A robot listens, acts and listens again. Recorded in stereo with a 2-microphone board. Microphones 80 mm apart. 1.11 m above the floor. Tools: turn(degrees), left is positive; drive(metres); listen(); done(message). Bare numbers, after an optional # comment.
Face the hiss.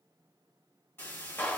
# The hiss: about 30° left or 150° left.
turn(30)
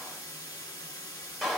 # So it is at 120° left.
turn(120)
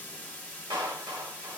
# The hiss is now 25° left.
turn(25)
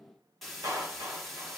done("Found it: a hiss, straight ahead, 1 to 2 m away.")